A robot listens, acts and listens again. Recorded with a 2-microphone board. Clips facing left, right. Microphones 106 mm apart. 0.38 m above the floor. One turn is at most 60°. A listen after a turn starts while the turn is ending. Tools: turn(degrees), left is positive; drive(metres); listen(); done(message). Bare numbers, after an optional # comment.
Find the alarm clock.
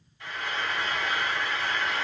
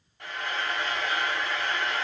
listen()
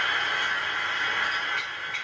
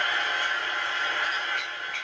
listen()
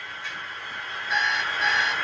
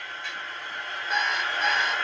# The alarm clock: about 50° right or 130° right.
turn(-50)
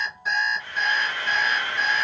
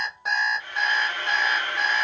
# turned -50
# So it is at 75° right.
turn(-60)
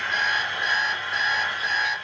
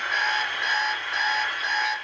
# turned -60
# The alarm clock is now 25° right.
turn(-25)
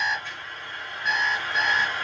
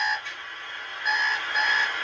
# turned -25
# The alarm clock is now 10° right.
turn(-10)
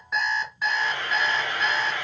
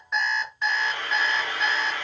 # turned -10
done("Facing the alarm clock.")